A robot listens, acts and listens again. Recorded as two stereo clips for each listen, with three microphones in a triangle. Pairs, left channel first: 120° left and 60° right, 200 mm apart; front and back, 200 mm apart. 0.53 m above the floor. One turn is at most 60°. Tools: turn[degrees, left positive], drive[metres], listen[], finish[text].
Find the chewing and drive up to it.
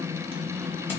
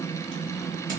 Action: listen[]
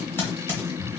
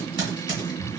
Action: listen[]
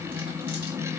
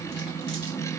Action: finish[I can't make out chewing, only typing on a keyboard.]